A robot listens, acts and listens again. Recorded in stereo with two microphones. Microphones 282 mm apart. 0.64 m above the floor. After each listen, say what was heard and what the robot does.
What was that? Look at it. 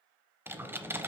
Turn 30° right.
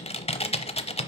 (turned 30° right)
So it is at 25° left. Turn 25° left.
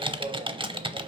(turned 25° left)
The typing on a keyboard is now 20° right. Turn 20° right.
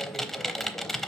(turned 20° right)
Facing the typing on a keyboard, under 1 m away.